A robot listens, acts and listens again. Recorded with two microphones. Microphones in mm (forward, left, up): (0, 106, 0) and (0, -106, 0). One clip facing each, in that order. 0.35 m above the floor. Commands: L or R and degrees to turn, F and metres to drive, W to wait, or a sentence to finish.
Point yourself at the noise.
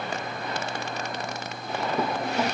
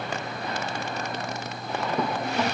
L30
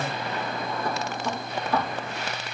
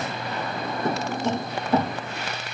R25
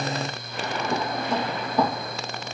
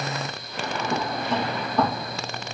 L10
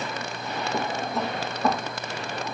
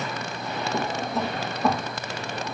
Found it: a drawer, straight ahead.